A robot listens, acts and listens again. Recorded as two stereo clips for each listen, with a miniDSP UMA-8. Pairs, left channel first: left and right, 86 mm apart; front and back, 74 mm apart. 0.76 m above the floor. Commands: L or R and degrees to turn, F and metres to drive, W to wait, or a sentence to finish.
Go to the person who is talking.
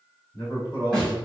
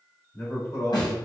L55
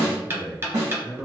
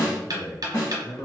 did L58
F1.0
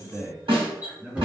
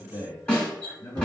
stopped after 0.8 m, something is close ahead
R10
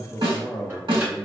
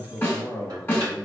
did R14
I am next to the man speaking.